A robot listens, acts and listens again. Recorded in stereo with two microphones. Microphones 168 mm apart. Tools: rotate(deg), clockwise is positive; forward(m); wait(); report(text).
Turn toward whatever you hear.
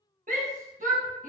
rotate(50)
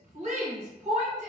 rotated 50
rotate(60)
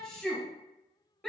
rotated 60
report("Facing the shout.")